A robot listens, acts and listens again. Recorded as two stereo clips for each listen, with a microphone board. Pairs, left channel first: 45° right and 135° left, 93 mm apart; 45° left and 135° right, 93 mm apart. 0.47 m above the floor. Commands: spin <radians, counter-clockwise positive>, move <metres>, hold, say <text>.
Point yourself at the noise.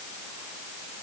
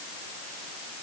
hold
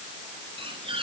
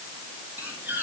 spin 2.71
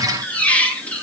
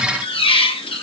spin 0.52
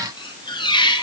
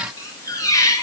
spin -0.17
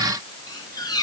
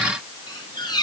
say Found it: a squeak, straight ahead.